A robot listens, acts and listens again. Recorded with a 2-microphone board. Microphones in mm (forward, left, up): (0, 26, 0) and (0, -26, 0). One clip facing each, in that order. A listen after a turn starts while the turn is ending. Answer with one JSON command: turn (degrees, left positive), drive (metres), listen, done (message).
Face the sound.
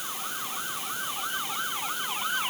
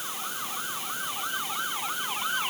{"listen": true}
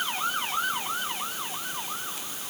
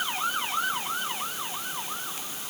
{"listen": true}
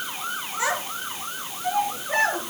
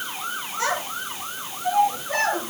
{"turn": 30}
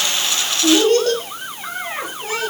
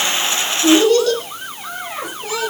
{"turn": 140}
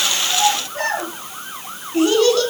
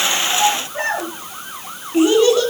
{"turn": -15}
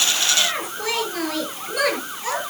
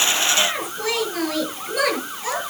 {"done": "Facing the child speaking."}